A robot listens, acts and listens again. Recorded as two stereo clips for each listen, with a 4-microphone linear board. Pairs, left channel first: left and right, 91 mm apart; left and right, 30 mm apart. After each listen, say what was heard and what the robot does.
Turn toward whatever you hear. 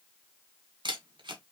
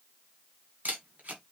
The camera shutter: about 60° right or 120° right. Turn 60° right.
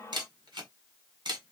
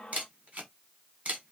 So it is at 55° right. Turn 55° right.
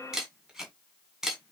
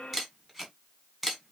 Found it: a camera shutter, straight ahead, 1 to 2 m away.